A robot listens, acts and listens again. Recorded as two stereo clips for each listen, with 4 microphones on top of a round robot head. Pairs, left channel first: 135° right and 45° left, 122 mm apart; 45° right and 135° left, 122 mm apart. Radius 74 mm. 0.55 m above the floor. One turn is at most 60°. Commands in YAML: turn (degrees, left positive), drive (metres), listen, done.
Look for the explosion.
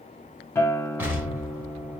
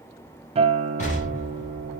turn: -30
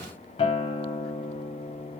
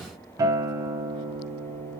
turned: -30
done: "I heard an explosion from this way, but can't make it out now."